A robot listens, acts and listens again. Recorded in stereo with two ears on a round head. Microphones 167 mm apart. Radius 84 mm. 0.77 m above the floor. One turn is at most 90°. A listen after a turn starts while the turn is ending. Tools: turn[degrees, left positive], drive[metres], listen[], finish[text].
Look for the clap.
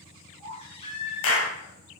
Action: turn[90]
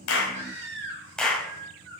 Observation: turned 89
Action: finish[Found it: a clap, straight ahead, over 4 m away.]